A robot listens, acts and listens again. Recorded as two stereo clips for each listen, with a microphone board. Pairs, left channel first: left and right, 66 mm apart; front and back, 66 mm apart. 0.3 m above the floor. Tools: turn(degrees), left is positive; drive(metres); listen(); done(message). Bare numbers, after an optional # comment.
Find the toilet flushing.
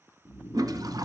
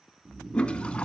# The toilet flushing: 75° right.
turn(-75)
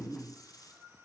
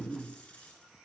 listen()
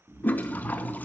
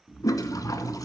# The toilet flushing is now 25° left.
turn(25)
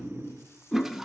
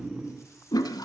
done("Found it: a toilet flushing, straight ahead.")